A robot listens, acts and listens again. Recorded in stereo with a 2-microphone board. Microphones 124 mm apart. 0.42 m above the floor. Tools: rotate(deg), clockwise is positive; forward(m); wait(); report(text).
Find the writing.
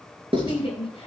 rotate(45)
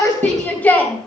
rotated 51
wait()
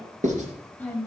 rotate(85)
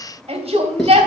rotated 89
wait()
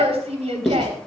report("Found it: writing, straight ahead, 2 to 4 m away.")